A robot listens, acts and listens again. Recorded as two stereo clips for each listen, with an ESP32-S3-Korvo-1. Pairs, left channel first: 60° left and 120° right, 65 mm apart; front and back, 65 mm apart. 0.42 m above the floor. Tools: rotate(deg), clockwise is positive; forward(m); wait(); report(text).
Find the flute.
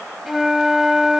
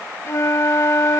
rotate(35)
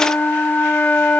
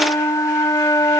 report("Facing the flute.")